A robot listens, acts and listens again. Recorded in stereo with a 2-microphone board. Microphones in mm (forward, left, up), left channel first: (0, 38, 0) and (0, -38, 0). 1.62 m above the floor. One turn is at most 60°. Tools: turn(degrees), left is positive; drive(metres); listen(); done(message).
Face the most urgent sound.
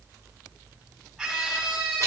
turn(degrees=30)
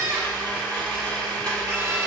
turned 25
turn(degrees=-25)
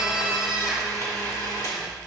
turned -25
done("Found it: a scream, straight ahead.")